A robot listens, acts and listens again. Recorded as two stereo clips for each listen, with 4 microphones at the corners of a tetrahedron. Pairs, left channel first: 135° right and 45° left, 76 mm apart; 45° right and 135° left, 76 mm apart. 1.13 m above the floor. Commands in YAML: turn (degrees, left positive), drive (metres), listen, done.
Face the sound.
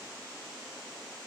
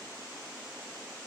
listen: true
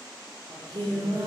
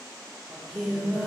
turn: 45
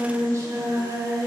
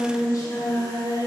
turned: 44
turn: -10
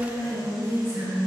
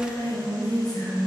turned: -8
turn: -10
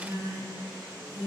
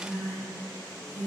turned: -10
done: "Facing the singing, 2 to 4 m away."